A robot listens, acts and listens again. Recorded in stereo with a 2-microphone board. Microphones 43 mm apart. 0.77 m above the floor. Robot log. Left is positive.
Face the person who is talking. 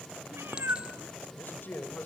note: The man speaking: about 50° left or 130° left.
cmd yaw +50
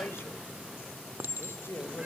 note: So it is at 80° left.
cmd yaw +80
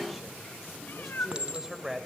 end: Found it: a man speaking, straight ahead, 2 to 4 m away.